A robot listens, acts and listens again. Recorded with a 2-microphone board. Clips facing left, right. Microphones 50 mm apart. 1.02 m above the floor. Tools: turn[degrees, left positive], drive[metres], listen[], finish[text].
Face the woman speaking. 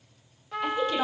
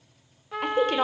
Thought: The woman speaking: about 55° right or 125° right.
Action: turn[-55]
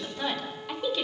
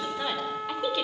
Action: finish[Found it: a woman speaking, straight ahead, over 4 m away.]